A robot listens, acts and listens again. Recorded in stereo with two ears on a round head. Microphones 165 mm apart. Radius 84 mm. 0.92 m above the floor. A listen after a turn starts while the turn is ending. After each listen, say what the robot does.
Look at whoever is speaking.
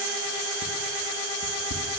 Keep listening.
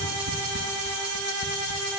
Keep listening.
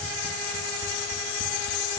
I can't make out anyone speaking.